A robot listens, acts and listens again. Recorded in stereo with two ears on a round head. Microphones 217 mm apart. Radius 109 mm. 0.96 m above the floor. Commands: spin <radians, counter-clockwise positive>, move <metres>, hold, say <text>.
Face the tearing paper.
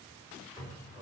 hold
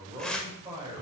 spin 0.52
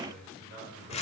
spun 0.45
spin 2.62
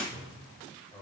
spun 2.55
hold
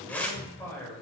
say Found it: tearing paper, straight ahead.